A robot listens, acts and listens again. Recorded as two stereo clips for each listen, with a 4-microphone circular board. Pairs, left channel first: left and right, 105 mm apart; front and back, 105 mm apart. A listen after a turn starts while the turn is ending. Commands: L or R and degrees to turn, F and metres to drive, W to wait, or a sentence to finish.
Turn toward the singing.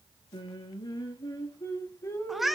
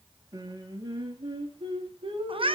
L155
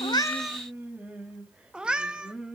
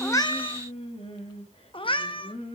Facing the singing.